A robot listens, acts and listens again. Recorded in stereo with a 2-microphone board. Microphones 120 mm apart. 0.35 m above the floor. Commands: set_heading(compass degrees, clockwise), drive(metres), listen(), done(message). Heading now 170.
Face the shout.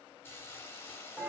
listen()
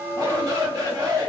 set_heading(205)
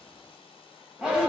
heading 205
set_heading(215)
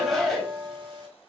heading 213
done("Found it: a shout, straight ahead.")